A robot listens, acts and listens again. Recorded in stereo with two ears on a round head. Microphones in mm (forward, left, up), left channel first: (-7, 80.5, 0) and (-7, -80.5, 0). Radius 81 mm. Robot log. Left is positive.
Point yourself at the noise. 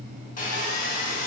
note: The sawing: about 45° left or 135° left.
cmd yaw +45
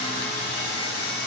note: So it is at 85° left.
cmd yaw +85
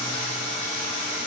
note: The sawing is now 30° left.
cmd yaw +30
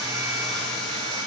end: Found it: sawing, straight ahead, 1 to 2 m away.